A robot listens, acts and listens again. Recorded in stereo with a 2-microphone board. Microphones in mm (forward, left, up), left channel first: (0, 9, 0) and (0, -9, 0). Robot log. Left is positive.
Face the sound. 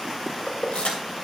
cmd yaw +90
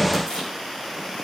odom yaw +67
note: So it is at 30° left.
cmd yaw +30
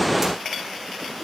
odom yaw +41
note: Nothing new. It was at 10° right.
cmd yaw -10
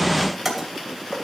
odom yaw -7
end: Found it: keys jangling, straight ahead.